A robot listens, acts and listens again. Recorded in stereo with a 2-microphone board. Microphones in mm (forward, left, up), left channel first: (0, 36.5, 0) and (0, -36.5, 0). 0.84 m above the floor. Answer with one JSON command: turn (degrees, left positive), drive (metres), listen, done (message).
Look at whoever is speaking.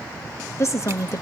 {"turn": 40}
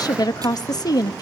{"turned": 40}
{"turn": 90}
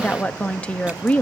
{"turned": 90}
{"turn": 20}
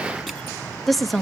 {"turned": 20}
{"done": "Found it: a woman speaking, straight ahead."}